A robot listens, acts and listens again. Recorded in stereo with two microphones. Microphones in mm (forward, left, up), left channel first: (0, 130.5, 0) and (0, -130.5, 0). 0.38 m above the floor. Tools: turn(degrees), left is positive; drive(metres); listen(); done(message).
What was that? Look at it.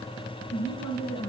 turn(degrees=75)
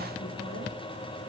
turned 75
listen()
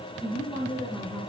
turn(degrees=20)
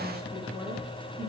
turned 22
done("Facing the woman speaking.")